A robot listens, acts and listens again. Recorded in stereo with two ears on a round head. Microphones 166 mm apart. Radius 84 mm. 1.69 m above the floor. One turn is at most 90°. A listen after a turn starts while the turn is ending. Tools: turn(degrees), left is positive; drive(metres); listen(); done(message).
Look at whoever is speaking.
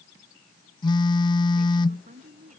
turn(degrees=-45)
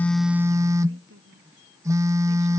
turn(degrees=-90)
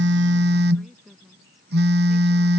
done("Found it: a woman speaking, straight ahead.")